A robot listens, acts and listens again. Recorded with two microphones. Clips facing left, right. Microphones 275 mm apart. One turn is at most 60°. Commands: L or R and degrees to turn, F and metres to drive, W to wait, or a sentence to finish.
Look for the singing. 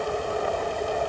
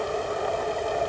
W
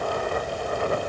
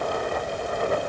W
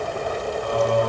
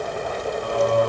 R30
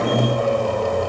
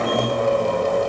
Found it: singing, straight ahead, over 4 m away.